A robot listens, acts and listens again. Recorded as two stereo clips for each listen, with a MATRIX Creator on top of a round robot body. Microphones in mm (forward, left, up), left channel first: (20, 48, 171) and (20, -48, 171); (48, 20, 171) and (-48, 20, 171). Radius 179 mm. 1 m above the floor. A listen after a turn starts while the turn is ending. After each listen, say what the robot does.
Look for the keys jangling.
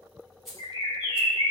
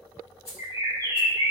Facing the keys jangling.